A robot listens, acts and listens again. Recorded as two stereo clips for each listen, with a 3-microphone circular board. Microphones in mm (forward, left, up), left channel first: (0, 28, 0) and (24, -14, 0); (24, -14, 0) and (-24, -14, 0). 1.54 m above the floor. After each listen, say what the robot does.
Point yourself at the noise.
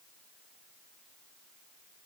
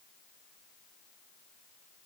Keep listening.
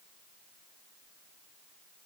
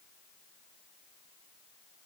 Keep listening.
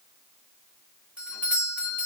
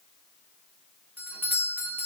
Turn 125° right.
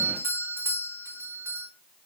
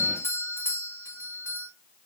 Turn 25° right.
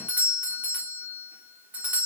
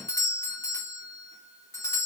Found it: a doorbell, straight ahead.